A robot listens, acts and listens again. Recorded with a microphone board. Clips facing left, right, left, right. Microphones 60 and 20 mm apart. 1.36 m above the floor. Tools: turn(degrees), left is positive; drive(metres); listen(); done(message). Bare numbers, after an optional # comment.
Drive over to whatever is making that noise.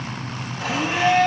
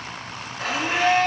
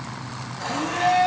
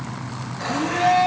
# The blender: about 55° right or 125° right.
turn(-55)
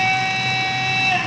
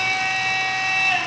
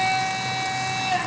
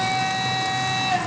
drive(1.0)
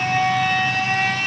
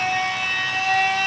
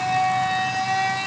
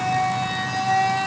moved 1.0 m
drive(1.0)
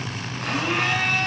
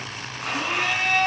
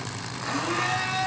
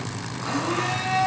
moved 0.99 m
drive(1.0)
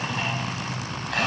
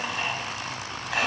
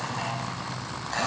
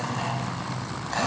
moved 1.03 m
drive(1.0)
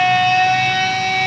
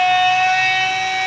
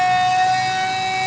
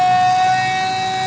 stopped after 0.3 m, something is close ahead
# The blender is now 10° right.
turn(-10)
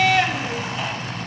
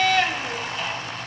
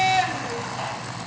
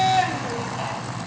done("I am next to the blender.")